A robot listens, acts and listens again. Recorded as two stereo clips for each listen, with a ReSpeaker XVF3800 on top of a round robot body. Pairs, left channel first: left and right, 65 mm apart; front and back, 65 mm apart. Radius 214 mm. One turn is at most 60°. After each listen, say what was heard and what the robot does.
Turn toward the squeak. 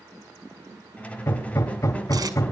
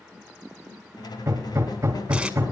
The squeak: 20° left. Turn 20° left.
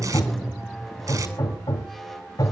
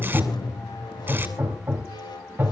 Found it: a squeak, straight ahead.